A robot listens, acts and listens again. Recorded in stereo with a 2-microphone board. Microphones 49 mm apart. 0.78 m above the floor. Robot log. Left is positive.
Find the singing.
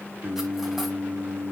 cmd yaw -90
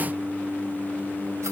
note: So it is at 20° right.
cmd yaw -20
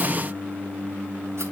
note: The singing is now 15° right.
cmd yaw -15
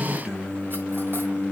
note: The singing is now 15° right.
cmd yaw -15
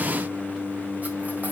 end: Found it: singing, straight ahead, 1 to 2 m away.